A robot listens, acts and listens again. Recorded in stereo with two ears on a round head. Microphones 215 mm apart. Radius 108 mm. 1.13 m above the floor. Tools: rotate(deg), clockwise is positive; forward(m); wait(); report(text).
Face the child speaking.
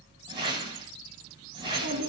rotate(65)
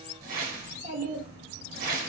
rotate(45)
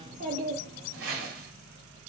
rotate(45)
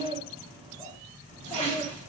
rotate(15)
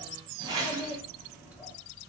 report("Facing the child speaking, 1 to 2 m away.")